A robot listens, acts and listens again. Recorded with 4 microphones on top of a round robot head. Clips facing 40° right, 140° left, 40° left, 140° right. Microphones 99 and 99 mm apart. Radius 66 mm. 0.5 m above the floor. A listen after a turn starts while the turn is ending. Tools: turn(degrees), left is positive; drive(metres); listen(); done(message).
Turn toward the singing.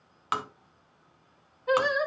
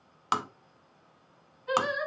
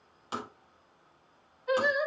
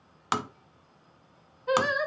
turn(degrees=-95)
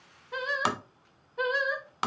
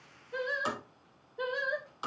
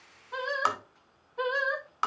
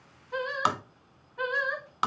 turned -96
turn(degrees=-35)
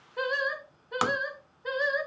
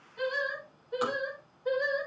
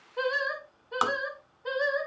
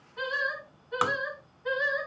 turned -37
turn(degrees=-20)
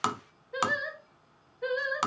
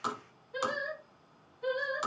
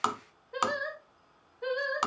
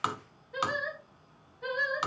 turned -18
turn(degrees=-10)
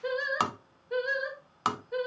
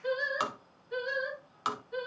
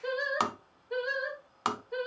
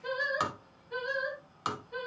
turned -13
done("Facing the singing, 2 to 4 m away.")